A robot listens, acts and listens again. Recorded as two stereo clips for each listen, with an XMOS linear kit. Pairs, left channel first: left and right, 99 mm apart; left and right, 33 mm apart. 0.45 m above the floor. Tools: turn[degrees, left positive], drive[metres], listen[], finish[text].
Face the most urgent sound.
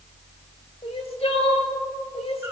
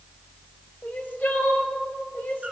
Action: turn[90]
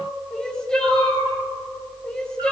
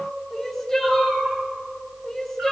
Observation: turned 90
Thought: So it is at 10° left.
Action: turn[10]
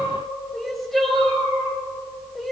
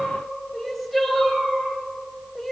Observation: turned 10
Action: finish[Found it: crying, straight ahead.]